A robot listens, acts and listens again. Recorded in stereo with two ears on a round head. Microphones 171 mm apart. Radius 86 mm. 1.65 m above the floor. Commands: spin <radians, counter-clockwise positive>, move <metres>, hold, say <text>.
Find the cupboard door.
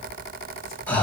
hold
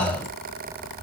hold
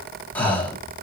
say I can't make out a cupboard door to turn to.